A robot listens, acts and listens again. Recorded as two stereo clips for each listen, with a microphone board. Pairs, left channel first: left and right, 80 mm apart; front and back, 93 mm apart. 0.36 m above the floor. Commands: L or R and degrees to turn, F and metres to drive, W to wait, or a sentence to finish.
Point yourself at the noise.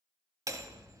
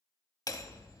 R45
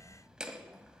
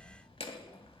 R10
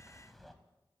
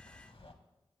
Facing the hammering, under 1 m away.